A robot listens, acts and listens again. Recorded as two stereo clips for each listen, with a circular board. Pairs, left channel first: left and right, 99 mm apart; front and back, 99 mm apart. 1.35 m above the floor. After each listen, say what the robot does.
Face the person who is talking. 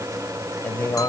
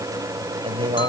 Turn 160° left.
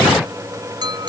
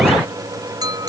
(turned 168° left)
Keep listening.
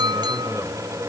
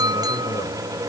Keep listening.
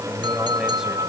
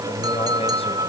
I heard a man speaking from this way, but can't make it out now.